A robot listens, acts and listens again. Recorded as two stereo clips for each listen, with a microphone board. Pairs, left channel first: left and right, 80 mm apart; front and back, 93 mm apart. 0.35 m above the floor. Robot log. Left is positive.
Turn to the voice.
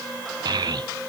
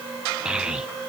note: The child speaking: 100° right.
cmd yaw -100
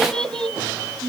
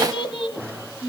note: The child speaking is now 10° left.
cmd yaw +10
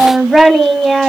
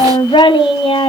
end: Found it: a child speaking, straight ahead, 1 to 2 m away.